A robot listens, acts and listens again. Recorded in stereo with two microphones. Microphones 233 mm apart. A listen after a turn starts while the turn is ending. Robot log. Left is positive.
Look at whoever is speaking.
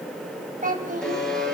note: The child speaking: about 35° right or 145° right.
cmd yaw -35
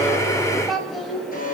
end: Found it: a child speaking, straight ahead.